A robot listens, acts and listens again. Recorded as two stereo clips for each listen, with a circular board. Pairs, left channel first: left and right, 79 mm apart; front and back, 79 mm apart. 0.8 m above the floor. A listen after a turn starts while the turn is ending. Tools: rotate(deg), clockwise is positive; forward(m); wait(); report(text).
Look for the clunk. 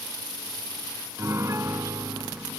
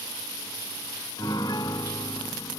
wait()
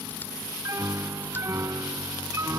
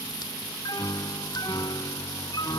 wait()
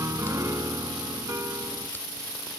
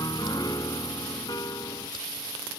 report("I can't make out a clunk, only a piano.")